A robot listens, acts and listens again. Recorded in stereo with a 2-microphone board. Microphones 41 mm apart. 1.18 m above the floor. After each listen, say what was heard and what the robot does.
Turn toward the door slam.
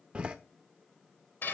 The door slam: about 25° right or 155° right. Turn 25° right.
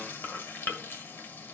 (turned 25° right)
Keep listening.
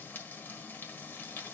I heard a door slam, but can't make it out now. It was about straight ahead or 130° right.